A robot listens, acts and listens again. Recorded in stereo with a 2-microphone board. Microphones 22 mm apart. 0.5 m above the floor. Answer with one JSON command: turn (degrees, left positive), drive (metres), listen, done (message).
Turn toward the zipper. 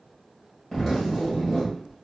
{"turn": 30}
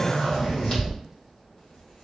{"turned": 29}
{"turn": 135}
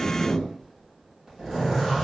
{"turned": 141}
{"done": "Found it: a zipper, straight ahead, 1 to 2 m away."}